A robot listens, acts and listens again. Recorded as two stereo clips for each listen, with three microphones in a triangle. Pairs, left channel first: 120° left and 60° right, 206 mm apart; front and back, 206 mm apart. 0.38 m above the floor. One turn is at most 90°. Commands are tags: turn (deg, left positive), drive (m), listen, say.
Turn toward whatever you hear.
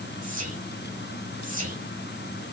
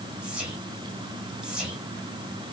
<turn deg="-90"/>
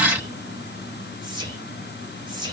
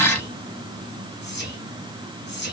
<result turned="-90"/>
<say>Found it: whispering, straight ahead, 1 to 2 m away.</say>